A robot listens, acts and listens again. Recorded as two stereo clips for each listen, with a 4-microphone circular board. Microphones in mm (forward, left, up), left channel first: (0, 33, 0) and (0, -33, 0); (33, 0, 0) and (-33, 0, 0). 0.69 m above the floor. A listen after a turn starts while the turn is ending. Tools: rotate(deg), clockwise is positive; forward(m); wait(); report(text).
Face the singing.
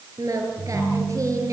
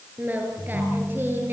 rotate(125)
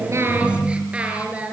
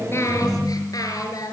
rotate(20)
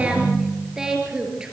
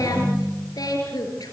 rotate(15)
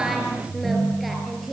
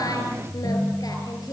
report("Facing the singing, over 4 m away.")